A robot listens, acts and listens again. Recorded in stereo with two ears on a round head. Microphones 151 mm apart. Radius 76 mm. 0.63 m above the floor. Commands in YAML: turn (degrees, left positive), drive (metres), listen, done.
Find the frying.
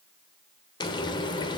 turn: 25
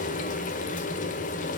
turn: 130
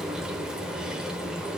done: "Found it: frying, straight ahead."